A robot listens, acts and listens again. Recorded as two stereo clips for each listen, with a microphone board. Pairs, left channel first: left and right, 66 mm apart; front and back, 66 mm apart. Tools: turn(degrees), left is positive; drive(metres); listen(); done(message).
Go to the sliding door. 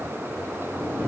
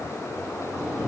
turn(degrees=-90)
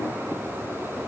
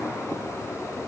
listen()
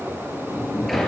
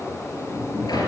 drive(metres=1.0)
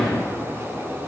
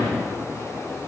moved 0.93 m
drive(metres=1.0)
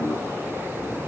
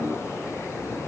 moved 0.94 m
listen()
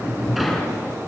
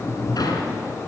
drive(metres=1.0)
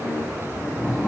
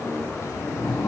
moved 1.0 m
drive(metres=1.0)
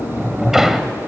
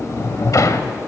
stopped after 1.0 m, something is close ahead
done("Arrived at the sliding door, straight ahead.")